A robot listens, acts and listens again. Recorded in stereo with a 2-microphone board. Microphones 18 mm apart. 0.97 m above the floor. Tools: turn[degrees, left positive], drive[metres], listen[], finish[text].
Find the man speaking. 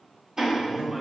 Thought: The man speaking: about 30° right or 150° right.
Action: turn[-30]
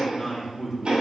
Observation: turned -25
Action: finish[Found it: a man speaking, straight ahead.]